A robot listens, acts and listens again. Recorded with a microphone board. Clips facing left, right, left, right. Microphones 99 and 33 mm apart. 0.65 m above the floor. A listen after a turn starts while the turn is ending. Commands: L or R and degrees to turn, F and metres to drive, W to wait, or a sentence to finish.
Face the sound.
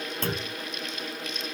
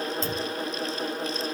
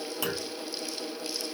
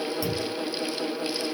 L60
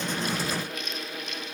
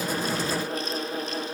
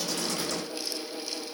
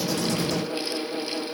W
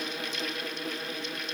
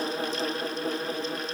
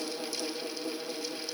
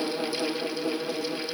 I heard a clunk, but can't make it out now. It was about straight ahead or 60° left.